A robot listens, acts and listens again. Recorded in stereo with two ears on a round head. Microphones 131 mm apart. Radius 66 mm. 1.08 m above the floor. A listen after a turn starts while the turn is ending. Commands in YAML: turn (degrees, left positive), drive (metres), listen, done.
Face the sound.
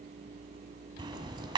turn: -30
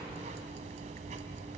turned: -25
turn: -120
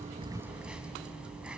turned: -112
turn: -10
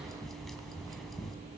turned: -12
done: "Found it: ticking, straight ahead."